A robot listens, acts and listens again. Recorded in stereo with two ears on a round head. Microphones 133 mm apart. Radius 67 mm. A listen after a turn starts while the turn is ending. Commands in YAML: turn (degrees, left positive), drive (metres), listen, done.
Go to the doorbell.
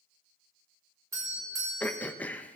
turn: -20
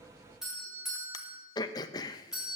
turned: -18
drive: 1.0
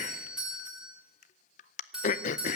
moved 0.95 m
drive: 1.0
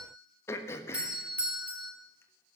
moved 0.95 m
turn: -10
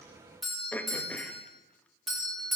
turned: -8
drive: 1.0
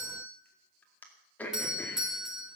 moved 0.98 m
drive: 1.0
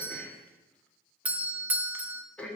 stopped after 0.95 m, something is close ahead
turn: -10
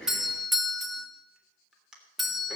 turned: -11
done: "I am next to the doorbell."